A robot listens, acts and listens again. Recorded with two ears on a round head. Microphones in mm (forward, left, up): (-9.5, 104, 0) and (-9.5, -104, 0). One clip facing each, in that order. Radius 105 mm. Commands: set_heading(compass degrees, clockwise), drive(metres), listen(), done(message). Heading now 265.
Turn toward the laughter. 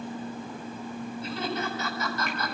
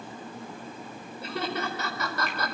set_heading(315)
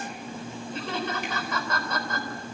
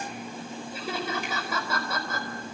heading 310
done("Found it: laughter, straight ahead, over 4 m away.")